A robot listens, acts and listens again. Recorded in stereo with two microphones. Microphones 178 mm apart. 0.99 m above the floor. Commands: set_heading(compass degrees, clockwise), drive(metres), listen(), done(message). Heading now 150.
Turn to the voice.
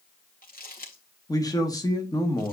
set_heading(130)
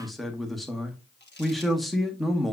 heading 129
done("Facing the man speaking, 1 to 2 m away.")